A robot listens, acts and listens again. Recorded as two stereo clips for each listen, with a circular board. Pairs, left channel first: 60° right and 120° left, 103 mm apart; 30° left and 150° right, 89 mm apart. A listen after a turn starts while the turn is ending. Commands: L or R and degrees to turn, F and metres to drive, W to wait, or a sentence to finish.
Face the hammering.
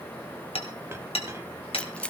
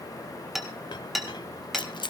R60
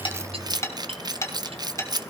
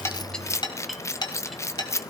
Facing the hammering, 2 to 4 m away.